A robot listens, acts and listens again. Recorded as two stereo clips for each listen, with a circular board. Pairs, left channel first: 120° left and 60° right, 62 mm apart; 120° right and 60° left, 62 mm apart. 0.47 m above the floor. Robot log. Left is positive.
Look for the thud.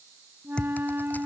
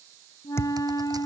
note: The thud: 165° right.
cmd yaw -165
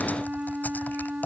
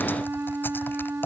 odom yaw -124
note: Nothing new. It was at 40° right.
cmd yaw -40
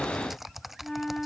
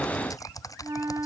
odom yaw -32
note: Nothing new. It was at 10° right.
cmd yaw -10
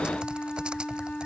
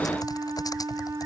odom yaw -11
end: I heard a thud from this way, but can't make it out now.